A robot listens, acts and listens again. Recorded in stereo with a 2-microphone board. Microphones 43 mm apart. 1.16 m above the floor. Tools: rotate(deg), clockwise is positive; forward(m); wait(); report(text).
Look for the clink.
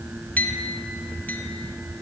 rotate(-45)
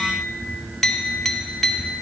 report("Facing the clink, under 1 m away.")